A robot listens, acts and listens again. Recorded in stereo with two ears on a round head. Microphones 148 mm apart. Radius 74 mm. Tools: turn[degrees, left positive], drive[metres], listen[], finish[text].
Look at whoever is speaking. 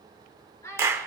Thought: The child speaking: about 20° left or 160° left.
Action: turn[20]
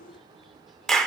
Action: listen[]
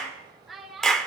Action: finish[Facing the child speaking.]